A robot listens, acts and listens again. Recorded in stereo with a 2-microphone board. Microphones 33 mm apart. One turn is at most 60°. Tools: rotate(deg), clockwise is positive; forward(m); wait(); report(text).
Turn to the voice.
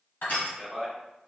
rotate(-30)
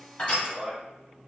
rotate(20)
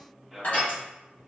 rotate(10)
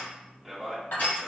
report("Facing the man speaking, 1 to 2 m away.")